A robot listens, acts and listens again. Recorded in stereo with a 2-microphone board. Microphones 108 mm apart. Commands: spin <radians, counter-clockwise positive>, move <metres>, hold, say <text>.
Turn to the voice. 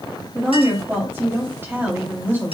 spin -0.35
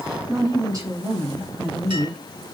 spin -2.36
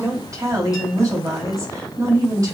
spin -0.70
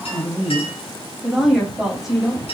say Facing the woman speaking, 2 to 4 m away.